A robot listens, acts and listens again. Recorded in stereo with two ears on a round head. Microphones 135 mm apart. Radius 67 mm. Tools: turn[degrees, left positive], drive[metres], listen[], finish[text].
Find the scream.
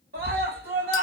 Thought: The scream: about 70° right or 110° right.
Action: turn[-70]
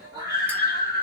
Thought: So it is at 30° right.
Action: turn[-30]
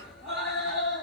Action: finish[Facing the scream.]